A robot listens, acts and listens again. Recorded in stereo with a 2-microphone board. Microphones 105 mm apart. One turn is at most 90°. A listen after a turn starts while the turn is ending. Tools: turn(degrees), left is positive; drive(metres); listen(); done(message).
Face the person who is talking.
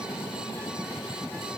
listen()
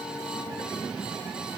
listen()
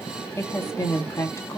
turn(degrees=30)
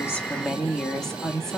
done("Facing the woman speaking.")